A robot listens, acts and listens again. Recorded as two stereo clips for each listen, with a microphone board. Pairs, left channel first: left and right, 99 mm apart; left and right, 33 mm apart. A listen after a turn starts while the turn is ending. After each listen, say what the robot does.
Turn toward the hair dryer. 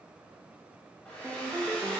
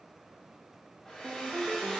Turn 15° left.
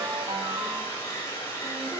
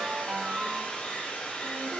Turn 145° left.
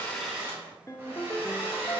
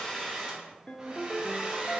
Turn 30° right.
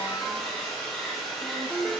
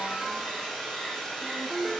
Found it: a hair dryer, straight ahead, 2 to 4 m away.